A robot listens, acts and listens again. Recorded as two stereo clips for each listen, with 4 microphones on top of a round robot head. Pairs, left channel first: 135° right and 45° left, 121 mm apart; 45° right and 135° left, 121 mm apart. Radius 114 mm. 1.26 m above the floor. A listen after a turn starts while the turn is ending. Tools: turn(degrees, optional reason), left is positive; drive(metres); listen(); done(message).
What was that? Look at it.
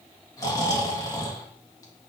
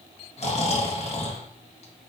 turn(degrees=-75, reason="The snoring: 75° right.")
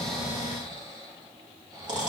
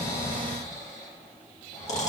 turn(degrees=-10, reason="The snoring is now 10° right.")
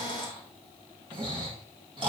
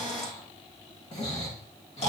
done("Found it: snoring, straight ahead, 1 to 2 m away.")